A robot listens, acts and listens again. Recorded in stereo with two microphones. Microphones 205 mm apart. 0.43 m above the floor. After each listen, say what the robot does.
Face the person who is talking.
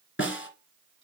Keep listening.
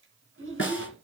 Turn 90° right.
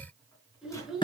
Found it: a child speaking, straight ahead.